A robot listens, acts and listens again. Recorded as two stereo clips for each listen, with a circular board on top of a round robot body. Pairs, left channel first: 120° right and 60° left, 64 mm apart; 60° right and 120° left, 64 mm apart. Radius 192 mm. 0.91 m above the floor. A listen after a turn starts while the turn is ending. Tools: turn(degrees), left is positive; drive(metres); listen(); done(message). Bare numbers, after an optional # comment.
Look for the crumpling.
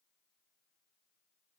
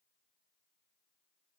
listen()
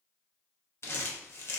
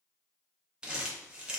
# The crumpling: 165° right.
turn(-165)
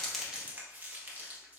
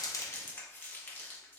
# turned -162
done("Facing the crumpling, 1 to 2 m away.")